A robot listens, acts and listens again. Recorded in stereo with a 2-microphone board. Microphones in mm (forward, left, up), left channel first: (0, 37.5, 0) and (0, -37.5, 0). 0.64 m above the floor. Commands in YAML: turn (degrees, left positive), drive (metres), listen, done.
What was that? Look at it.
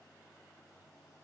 listen: true
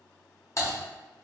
turn: 45
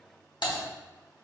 turn: 90
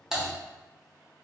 done: "Found it: typing on a keyboard, straight ahead, under 1 m away."